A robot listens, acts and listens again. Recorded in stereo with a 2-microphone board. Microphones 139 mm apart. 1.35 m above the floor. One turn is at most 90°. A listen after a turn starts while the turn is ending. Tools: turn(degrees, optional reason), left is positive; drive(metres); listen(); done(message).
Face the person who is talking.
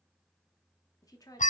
turn(degrees=25, reason="The woman speaking: about 25° left or 155° left.")
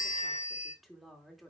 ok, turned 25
done("Found it: a woman speaking, straight ahead.")